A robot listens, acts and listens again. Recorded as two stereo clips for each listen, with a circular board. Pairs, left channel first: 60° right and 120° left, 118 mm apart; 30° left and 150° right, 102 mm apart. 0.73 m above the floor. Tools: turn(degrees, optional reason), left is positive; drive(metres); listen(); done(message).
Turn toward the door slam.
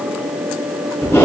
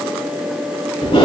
listen()
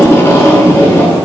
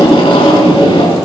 listen()
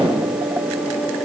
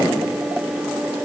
done("I can't make out a door slam to turn to.")